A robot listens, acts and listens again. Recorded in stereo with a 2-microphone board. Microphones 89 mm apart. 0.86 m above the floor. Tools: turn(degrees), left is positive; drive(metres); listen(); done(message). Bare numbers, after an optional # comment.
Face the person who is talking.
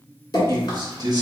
# The man speaking: about 45° right or 135° right.
turn(-45)
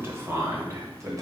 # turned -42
# The man speaking: about 35° right or 145° right.
turn(-35)
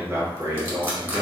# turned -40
# The man speaking: about 50° right or 130° right.
turn(-50)
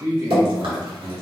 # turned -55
# So it is at 40° right.
turn(-40)
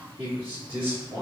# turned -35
# The man speaking is now 15° right.
turn(-15)
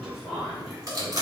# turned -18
done("Facing the man speaking.")